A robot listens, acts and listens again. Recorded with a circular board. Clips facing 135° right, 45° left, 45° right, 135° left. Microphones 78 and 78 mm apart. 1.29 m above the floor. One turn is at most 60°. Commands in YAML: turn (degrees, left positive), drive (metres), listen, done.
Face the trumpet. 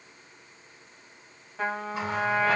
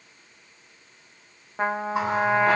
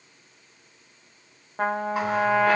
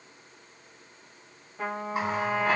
turn: -10
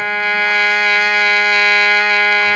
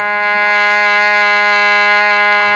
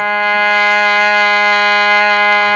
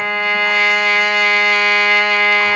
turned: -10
done: "Facing the trumpet, under 1 m away."